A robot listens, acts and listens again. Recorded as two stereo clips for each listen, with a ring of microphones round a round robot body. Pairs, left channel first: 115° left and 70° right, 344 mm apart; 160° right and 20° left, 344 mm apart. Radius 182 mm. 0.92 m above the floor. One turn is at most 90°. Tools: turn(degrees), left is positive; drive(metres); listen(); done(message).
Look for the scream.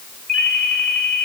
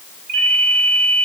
listen()
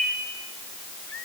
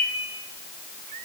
listen()
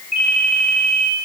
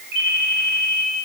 done("I can't make out a scream, only a ringtone.")